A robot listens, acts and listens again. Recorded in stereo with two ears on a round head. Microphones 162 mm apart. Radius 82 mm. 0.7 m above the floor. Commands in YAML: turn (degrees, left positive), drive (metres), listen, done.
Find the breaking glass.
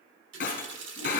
turn: 45
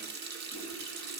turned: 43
listen: true
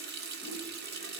done: "I heard breaking glass, but can't make it out now. It was about straight ahead or 90° left."